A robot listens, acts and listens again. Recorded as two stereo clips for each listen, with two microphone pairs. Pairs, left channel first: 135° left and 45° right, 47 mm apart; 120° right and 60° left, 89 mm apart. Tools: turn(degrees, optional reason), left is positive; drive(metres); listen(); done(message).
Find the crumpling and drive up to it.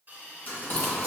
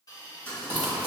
turn(degrees=180, reason="The crumpling: straight behind.")
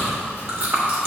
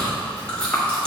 listen()
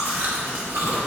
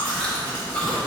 listen()
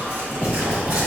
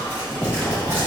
done("Facing where the crumpling came from. I can't hear it now. I did not reach it.")